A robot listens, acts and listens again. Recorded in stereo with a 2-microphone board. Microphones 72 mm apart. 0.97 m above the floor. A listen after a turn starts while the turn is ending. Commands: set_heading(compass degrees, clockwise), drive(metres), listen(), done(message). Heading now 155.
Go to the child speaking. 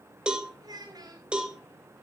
set_heading(215)
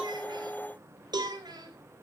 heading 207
set_heading(272)
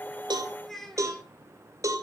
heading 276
drive(1.0)
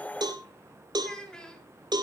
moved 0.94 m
set_heading(266)
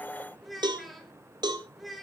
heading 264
drive(1.0)
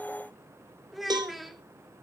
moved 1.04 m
drive(1.0)
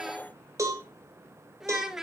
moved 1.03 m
drive(1.0)
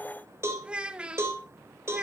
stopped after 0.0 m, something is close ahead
set_heading(279)
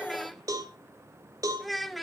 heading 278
done("I am next to the child speaking.")